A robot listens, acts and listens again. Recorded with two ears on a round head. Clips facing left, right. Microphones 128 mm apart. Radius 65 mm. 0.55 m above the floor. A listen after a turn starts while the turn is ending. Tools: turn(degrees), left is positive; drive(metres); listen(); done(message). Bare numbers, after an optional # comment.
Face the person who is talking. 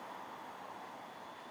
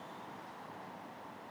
listen()
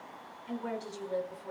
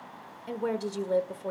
# The woman speaking: about 65° right or 115° right.
turn(-65)
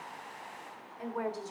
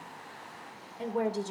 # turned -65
# So it is at 35° right.
turn(-35)
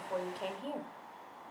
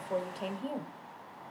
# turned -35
done("Facing the woman speaking.")